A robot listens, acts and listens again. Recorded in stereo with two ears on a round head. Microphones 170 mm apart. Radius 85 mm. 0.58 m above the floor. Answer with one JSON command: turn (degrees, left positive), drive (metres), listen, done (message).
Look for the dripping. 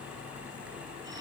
{"listen": true}
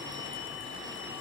{"listen": true}
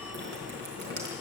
{"turn": -55}
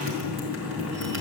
{"turn": -65}
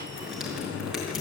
{"done": "Facing the dripping."}